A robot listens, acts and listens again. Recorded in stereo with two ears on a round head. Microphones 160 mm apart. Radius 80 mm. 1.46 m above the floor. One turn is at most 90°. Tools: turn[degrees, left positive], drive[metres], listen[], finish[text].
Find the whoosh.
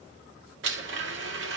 Action: listen[]
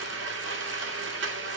Action: listen[]
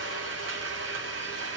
Action: finish[I can't make out a whoosh to turn to.]